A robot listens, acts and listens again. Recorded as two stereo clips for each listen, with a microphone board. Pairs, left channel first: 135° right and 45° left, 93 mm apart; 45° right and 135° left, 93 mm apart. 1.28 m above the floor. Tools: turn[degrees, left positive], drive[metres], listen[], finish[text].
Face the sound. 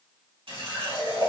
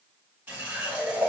Thought: The running tap: 65° left.
Action: turn[65]
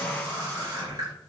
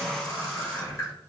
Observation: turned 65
Thought: The running tap is now 10° left.
Action: turn[10]
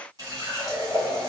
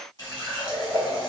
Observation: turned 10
Action: finish[Facing the running tap.]